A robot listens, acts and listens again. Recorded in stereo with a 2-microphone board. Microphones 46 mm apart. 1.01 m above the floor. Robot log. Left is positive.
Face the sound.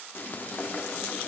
note: The frying: about 45° left or 135° left.
cmd yaw +45
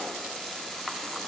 end: Found it: frying, straight ahead.